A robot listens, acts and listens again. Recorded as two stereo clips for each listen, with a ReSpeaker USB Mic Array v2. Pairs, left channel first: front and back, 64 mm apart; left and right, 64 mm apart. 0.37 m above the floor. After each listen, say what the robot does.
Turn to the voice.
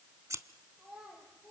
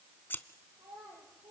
Turn 100° right.
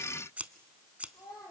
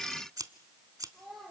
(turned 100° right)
Found it: a child speaking, straight ahead.